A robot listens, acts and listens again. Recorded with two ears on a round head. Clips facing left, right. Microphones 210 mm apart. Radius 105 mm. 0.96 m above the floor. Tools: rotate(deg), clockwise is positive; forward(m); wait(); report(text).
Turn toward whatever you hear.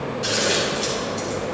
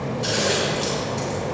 rotate(-30)
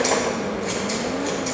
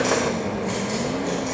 wait()
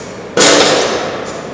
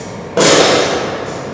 rotate(-150)
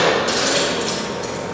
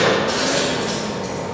rotate(-45)
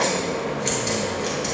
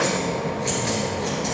wait()
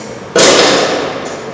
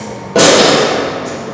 rotate(-20)
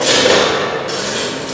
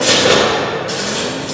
report("Facing the scissors, 2 to 4 m away.")